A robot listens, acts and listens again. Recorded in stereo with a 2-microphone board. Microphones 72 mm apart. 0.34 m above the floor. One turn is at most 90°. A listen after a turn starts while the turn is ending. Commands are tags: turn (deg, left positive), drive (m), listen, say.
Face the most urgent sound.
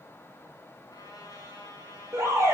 <turn deg="-40"/>
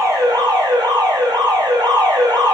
<turn deg="-90"/>
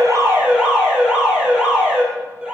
<turn deg="-10"/>
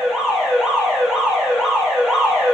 <say>Facing the alarm.</say>